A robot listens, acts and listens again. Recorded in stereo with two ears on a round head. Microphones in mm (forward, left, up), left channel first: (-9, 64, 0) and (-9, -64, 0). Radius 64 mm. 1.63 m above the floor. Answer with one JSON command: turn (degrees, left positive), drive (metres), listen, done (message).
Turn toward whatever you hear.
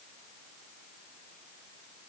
{"listen": true}
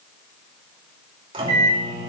{"turn": -35}
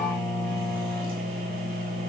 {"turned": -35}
{"turn": -110}
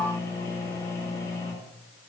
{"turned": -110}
{"turn": 20}
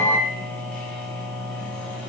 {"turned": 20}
{"done": "Facing the microwave."}